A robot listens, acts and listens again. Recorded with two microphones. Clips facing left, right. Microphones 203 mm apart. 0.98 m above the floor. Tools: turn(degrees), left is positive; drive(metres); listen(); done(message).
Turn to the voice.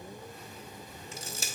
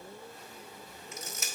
listen()
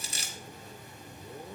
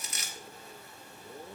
listen()
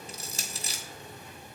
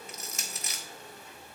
done("I can't make out anyone speaking, only crushing.")